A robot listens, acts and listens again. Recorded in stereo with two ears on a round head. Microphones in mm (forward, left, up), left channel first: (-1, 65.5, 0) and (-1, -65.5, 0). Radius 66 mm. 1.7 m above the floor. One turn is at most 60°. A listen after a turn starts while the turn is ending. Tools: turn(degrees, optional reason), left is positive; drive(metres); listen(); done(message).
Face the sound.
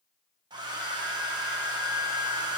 turn(degrees=-30, reason="The hair dryer: about 30° right or 150° right.")
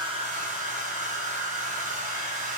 turn(degrees=-60, reason="So it is at 120° right.")
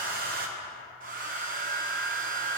turn(degrees=-60, reason="The hair dryer is now 70° right.")
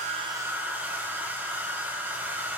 turn(degrees=-15, reason="The hair dryer is now 15° right.")
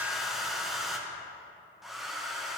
done("Facing the hair dryer, 1 to 2 m away.")